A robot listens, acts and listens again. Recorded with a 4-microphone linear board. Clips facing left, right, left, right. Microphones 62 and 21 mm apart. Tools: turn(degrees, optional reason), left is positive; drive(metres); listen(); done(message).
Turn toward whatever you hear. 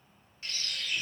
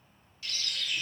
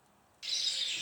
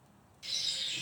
turn(degrees=30, reason="The bird: about 30° left or 150° left.")
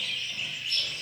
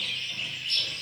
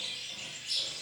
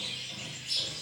done("Facing the bird, 1 to 2 m away.")